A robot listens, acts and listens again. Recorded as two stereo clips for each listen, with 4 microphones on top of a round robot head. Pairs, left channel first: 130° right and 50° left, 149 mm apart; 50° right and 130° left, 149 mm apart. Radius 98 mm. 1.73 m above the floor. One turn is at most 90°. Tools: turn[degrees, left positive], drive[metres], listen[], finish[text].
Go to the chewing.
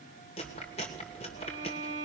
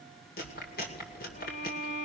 Thought: The chewing: 80° right.
Action: turn[-80]
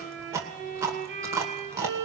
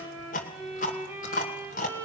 Thought: The chewing is now 20° right.
Action: turn[-20]
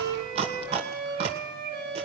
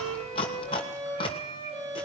Action: drive[1.0]
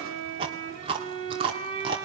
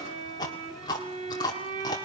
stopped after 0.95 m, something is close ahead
Action: finish[Arrived at the chewing, straight ahead.]